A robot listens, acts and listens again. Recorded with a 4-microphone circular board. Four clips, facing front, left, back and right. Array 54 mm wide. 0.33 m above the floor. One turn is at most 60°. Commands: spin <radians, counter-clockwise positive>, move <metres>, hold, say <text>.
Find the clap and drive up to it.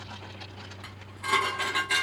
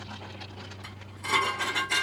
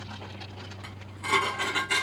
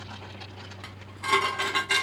hold
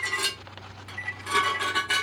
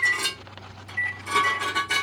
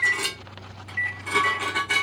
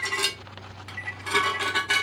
hold
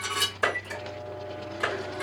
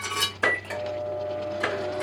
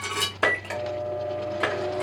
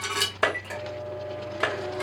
spin -1.05
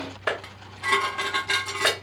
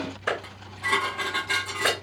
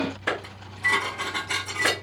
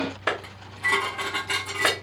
spin -0.96
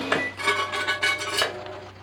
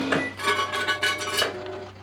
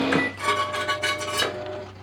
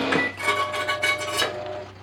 hold
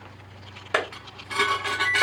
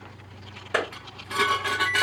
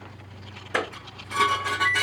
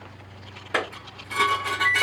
spin -0.17
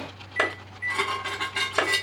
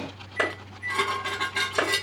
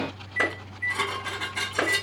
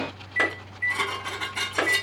move 1.0
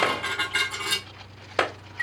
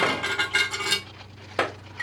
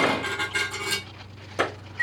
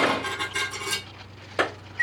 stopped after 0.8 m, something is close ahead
say I am next to the clap.